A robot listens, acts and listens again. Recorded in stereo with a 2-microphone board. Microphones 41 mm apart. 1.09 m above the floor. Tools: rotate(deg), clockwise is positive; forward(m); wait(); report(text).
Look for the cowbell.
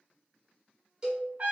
rotate(20)
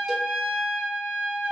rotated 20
wait()
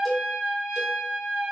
report("Found it: a cowbell, straight ahead, 1 to 2 m away.")